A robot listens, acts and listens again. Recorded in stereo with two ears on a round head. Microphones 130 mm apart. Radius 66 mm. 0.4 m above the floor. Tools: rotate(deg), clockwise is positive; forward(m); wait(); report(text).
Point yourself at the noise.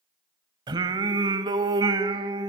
rotate(30)
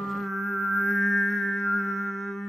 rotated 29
report("Facing the singing.")